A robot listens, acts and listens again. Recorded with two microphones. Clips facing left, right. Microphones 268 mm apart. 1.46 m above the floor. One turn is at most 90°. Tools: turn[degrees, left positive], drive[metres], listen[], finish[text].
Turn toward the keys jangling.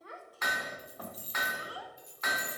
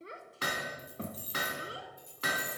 Thought: The keys jangling: about 60° right or 120° right.
Action: turn[-60]
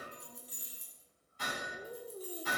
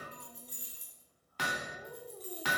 Action: finish[Found it: keys jangling, straight ahead, 2 to 4 m away.]